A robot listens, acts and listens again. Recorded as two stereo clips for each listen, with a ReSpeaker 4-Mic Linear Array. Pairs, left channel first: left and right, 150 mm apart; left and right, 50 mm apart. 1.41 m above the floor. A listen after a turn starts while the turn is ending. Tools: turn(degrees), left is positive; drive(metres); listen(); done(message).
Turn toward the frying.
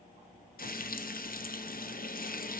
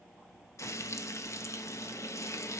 turn(degrees=75)
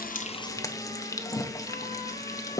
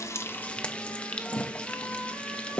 turn(degrees=25)
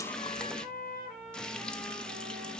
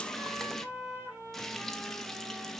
done("Facing the frying, under 1 m away.")